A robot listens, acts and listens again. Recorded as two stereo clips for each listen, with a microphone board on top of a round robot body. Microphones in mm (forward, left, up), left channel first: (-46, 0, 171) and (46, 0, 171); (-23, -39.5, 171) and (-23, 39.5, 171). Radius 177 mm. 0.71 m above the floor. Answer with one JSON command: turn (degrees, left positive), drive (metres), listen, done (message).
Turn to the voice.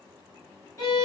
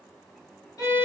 {"listen": true}
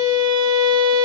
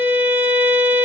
{"listen": true}
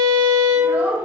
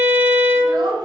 {"turn": 70}
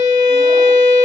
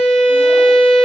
{"listen": true}
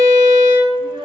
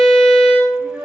{"turn": 15}
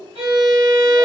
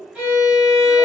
{"listen": true}
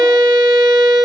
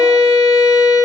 {"listen": true}
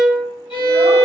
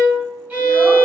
{"done": "Facing where the child speaking came from. I can't hear it now."}